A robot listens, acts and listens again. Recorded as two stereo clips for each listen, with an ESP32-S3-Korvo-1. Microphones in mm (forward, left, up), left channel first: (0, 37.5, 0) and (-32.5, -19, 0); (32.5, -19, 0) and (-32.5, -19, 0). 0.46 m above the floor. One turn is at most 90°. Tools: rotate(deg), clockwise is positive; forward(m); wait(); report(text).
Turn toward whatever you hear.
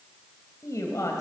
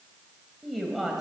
rotate(-90)
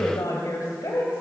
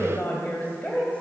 rotate(-65)
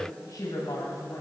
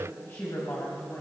rotate(-50)
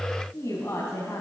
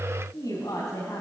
rotate(-15)
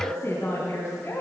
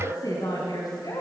report("Found it: a woman speaking, straight ahead.")